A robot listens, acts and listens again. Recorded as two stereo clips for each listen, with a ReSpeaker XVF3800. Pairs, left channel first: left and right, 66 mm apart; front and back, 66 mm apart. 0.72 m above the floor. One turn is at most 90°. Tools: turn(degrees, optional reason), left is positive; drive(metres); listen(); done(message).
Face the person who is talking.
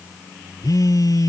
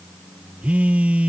listen()
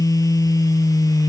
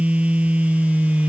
listen()
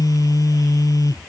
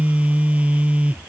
done("I can't make out anyone speaking to turn to.")